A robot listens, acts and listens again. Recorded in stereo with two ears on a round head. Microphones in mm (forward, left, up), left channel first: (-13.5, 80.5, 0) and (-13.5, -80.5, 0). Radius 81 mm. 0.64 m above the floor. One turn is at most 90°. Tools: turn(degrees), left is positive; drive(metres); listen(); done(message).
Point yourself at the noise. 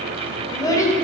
turn(degrees=20)
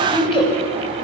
turn(degrees=30)
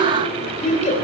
turn(degrees=90)
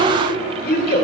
turn(degrees=50)
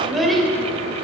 done("Facing the child speaking.")